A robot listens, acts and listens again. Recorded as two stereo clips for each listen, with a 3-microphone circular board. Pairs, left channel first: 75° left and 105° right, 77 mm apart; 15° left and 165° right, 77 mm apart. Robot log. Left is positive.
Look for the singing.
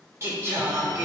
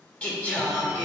note: The singing: 45° right.
cmd yaw -45
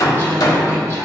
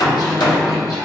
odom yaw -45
cmd idle
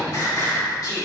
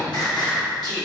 note: The singing is now 30° left.
cmd yaw +30
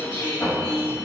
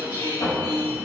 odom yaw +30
note: The singing is now 15° left.
cmd yaw +15
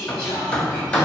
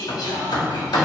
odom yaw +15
end: Facing the singing, 2 to 4 m away.